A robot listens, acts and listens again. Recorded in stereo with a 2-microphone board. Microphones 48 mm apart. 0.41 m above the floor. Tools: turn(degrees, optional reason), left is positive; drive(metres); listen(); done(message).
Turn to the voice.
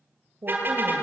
turn(degrees=-55, reason="The woman speaking: about 55° right or 125° right.")
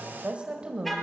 turn(degrees=-25, reason="So it is at 25° right.")
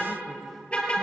done("Facing the woman speaking, 2 to 4 m away.")